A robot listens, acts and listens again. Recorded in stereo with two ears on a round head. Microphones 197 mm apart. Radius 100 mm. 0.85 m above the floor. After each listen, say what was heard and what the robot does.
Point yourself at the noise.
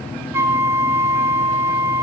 Turn 30° right.
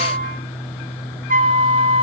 So it is at 135° right. Turn 135° right.
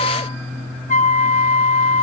The flute is now 40° left. Turn 40° left.
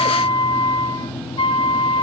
The flute is now 25° left. Turn 25° left.
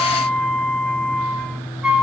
Facing the flute, 1 to 2 m away.